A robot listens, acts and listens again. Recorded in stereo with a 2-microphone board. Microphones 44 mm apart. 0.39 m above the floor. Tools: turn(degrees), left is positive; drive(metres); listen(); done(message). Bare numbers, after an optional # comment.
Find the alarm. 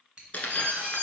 # The alarm: about 60° right or 120° right.
turn(-60)
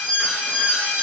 # So it is at 25° right.
turn(-25)
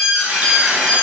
# The alarm is now 15° right.
turn(-15)
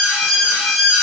done("Facing the alarm.")